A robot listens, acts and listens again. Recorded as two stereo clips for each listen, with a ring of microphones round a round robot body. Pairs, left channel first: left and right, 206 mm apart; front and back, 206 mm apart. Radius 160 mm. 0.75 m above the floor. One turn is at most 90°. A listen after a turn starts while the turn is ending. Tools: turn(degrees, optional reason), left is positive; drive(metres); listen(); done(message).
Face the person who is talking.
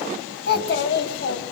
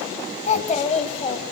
turn(degrees=60, reason="The child speaking: 60° left.")
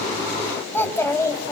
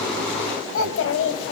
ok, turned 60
turn(degrees=15, reason="The child speaking is now 15° left.")
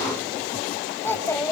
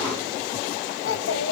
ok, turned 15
turn(degrees=15, reason="The child speaking is now 15° left.")
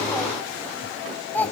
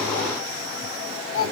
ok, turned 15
turn(degrees=10, reason="The child speaking is now 10° left.")
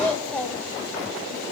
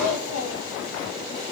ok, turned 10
done("Found it: a child speaking, straight ahead.")